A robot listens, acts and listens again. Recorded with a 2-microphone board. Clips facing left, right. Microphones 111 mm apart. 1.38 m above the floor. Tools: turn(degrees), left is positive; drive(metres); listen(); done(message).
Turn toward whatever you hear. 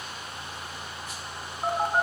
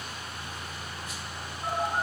turn(degrees=55)
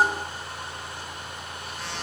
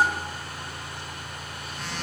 done("Found it: a phone buzzing, straight ahead, over 4 m away.")